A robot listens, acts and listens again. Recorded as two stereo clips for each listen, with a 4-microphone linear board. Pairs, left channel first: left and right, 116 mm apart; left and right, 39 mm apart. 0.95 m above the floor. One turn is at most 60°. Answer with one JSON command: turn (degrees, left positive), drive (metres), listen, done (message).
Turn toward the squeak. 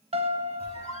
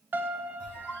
{"turn": 60}
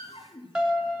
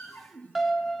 {"turn": 45}
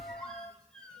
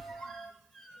{"done": "Found it: a squeak, straight ahead."}